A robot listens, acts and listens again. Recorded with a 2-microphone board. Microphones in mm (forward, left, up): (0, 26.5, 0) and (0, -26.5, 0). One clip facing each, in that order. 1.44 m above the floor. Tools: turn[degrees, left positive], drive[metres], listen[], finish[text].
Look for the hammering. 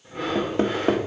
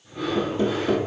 Thought: The hammering: about 65° left or 115° left.
Action: turn[65]
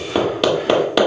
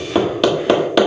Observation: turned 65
Action: finish[Found it: hammering, straight ahead, 1 to 2 m away.]